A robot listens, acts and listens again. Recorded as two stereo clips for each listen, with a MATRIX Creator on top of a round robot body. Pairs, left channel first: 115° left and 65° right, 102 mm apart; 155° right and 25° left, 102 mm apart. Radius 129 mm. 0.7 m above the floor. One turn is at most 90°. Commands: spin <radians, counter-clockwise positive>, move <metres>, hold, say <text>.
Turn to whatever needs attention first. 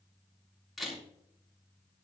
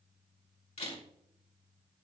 hold
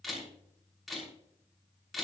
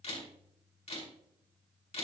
hold
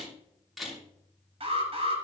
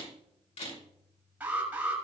spin -0.96
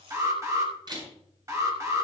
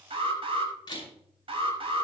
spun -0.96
spin -0.17
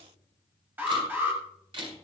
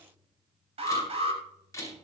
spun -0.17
say Facing the alarm, over 4 m away.